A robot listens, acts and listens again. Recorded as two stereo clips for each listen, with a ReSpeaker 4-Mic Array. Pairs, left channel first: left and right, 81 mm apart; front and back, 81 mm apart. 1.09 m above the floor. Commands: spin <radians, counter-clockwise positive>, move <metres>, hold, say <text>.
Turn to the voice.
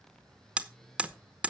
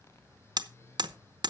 hold
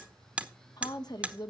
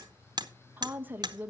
spin 2.01
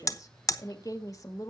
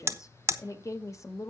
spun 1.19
spin 0.79
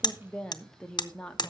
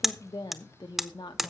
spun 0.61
spin 0.17
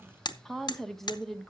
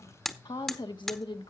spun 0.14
say Facing the woman speaking.